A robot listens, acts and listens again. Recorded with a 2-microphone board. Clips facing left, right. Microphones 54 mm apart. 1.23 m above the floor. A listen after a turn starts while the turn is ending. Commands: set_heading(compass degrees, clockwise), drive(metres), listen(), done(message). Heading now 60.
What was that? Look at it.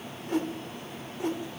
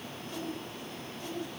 set_heading(330)
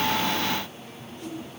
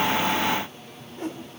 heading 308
set_heading(343)
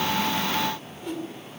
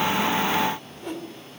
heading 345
done("Facing the whoosh, 2 to 4 m away.")